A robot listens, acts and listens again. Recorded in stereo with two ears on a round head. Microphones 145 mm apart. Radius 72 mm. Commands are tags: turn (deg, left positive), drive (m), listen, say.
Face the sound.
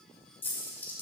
<turn deg="30"/>
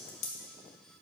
<turn deg="135"/>
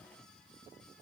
<say>I heard a dropped coin from this way, but can't make it out now.</say>